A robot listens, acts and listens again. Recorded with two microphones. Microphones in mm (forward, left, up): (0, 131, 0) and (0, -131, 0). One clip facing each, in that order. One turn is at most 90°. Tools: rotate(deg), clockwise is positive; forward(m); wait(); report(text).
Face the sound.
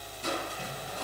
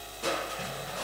rotate(90)
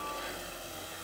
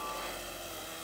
wait()
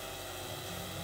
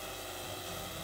wait()
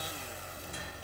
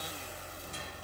report("Facing where the crushing came from. I can't hear it now.")